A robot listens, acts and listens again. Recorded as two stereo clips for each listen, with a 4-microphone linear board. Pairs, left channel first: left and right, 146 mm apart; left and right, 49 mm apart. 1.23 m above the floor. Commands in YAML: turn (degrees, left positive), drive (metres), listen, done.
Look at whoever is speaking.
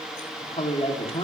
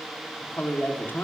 turn: 40
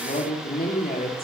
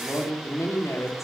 turn: 100
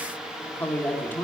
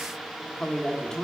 turn: 15
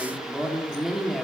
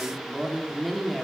done: "Found it: a woman speaking, straight ahead, 2 to 4 m away."